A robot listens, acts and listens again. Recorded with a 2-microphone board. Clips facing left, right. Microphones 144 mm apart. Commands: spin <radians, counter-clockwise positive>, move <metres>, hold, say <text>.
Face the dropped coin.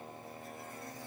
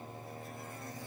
hold
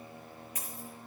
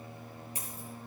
spin -0.52
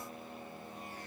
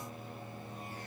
hold
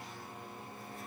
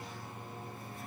say I heard a dropped coin, but can't make it out now. It was about straight ahead or 120° right.